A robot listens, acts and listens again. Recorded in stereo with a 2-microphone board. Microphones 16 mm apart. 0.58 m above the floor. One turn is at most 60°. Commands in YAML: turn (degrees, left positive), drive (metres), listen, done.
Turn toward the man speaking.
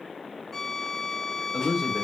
turn: -55
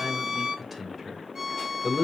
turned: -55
done: "Facing the man speaking."